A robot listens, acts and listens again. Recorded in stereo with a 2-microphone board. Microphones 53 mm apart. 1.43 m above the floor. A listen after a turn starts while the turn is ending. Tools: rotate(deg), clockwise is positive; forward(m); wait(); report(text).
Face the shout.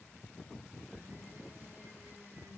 wait()
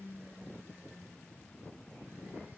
wait()
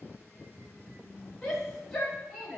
rotate(-30)
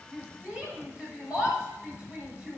rotate(20)
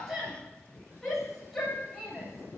report("Found it: a shout, straight ahead.")